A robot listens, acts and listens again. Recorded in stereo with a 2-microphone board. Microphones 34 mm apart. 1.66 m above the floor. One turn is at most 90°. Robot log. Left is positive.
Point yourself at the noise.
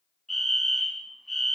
cmd yaw +30
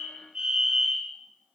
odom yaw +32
note: So it is at 30° right.
cmd yaw -30
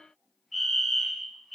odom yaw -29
end: Found it: a fire alarm, straight ahead, under 1 m away.